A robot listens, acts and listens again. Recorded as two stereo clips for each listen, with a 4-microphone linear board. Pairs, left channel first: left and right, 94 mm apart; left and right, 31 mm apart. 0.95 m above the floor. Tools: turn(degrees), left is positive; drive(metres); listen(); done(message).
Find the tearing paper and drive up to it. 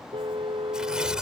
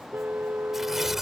turn(degrees=-30)
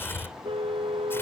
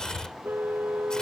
turn(degrees=25)
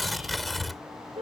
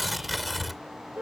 drive(metres=1.0)
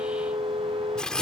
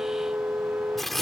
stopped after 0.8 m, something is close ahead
done("Something is in my way. I am facing the tearing paper but have not reached it.")